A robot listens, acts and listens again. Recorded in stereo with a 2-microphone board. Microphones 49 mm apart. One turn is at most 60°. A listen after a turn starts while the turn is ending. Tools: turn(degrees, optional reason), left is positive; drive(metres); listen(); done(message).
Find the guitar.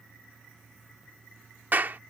listen()
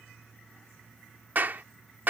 listen()
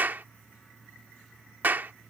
done("I can't make out a guitar, only a clap.")